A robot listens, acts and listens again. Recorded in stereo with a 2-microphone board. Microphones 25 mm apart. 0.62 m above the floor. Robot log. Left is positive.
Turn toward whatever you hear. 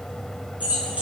note: The keys jangling: about 70° right or 110° right.
cmd yaw -70
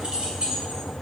note: So it is at 45° right.
cmd yaw -45
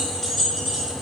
end: Found it: keys jangling, straight ahead, 2 to 4 m away.